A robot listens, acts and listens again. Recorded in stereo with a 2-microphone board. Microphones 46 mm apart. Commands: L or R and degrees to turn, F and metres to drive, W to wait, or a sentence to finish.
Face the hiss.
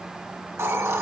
R70
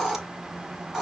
R10
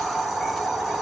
Found it: a hiss, straight ahead, 1 to 2 m away.